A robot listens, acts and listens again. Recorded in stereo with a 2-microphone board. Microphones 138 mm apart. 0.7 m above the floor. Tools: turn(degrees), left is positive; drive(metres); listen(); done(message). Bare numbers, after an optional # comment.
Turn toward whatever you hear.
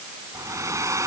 # The hair dryer: about 20° right or 160° right.
turn(-20)
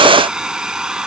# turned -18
done("Found it: a hair dryer, straight ahead.")